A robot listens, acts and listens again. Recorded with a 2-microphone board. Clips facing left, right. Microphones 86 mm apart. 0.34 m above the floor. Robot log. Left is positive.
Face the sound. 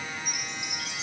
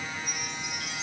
cmd yaw +90
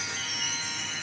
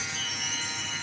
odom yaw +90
end: Found it: a chime, straight ahead.